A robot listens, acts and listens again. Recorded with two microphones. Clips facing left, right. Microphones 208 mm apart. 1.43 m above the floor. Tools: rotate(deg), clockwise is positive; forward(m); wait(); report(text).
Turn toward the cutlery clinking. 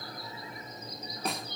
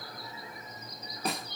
wait()
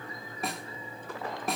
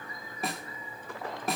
wait()
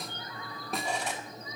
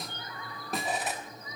rotate(30)
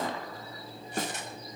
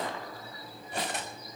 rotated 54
rotate(125)
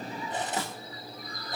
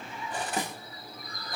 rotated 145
rotate(-20)
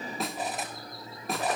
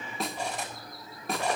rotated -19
report("Found it: cutlery clinking, straight ahead.")